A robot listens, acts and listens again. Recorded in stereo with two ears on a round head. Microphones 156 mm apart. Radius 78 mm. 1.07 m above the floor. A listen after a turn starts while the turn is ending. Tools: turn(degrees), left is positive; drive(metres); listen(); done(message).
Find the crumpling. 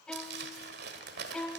turn(degrees=-65)
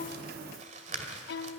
turn(degrees=-45)
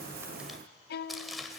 done("Found it: crumpling, straight ahead.")